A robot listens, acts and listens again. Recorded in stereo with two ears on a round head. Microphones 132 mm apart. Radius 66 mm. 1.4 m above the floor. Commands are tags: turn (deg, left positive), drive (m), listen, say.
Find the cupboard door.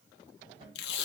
<turn deg="-40"/>
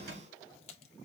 <turn deg="-100"/>
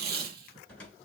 <turn deg="10"/>
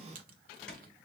<say>Found it: a cupboard door, straight ahead, 2 to 4 m away.</say>